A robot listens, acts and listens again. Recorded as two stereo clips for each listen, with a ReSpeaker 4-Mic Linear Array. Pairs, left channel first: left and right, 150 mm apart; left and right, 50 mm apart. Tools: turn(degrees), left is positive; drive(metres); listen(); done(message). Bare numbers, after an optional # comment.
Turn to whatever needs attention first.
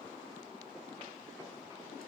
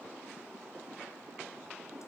listen()
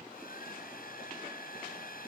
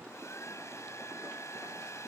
listen()
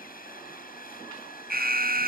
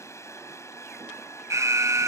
turn(-90)
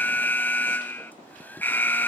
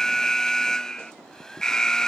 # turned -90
# So it is at 10° left.
turn(10)
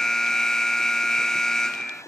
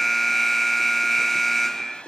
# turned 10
done("Found it: an alarm, straight ahead.")